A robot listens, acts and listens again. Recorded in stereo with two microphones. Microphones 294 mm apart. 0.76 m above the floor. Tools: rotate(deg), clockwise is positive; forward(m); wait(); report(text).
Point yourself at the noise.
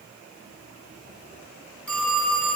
rotate(-30)
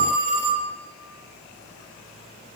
rotate(25)
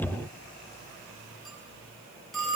report("Facing the phone ringing.")